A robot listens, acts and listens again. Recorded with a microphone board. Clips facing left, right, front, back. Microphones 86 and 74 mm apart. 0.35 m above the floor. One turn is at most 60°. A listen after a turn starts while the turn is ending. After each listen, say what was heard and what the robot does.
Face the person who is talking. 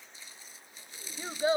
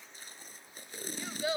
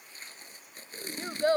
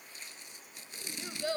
The child speaking: 35° left. Turn 35° left.
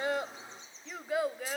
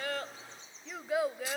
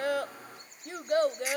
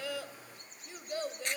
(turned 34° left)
Facing the child speaking.